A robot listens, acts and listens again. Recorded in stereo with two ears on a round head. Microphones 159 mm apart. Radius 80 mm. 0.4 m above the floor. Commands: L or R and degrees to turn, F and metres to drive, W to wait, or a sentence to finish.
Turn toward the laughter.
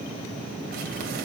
W
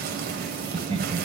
R30
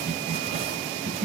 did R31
R40
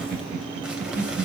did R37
R125
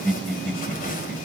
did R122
Facing the laughter.